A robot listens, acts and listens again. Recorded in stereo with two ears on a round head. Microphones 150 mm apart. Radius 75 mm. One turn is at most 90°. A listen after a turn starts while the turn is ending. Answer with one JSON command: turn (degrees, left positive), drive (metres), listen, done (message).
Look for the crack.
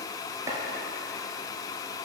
{"listen": true}
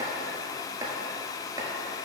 {"listen": true}
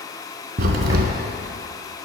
{"turn": -60}
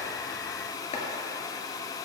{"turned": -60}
{"listen": true}
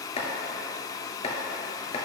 {"done": "I heard a crack, but can't make it out now. It was about straight ahead or 60° right."}